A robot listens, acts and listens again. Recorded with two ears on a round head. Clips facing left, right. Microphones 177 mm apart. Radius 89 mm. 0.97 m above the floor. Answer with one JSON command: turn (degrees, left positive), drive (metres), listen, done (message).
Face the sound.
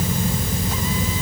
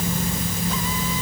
{"listen": true}
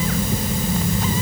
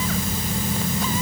{"listen": true}
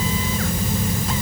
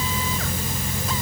{"done": "I can't make out anything."}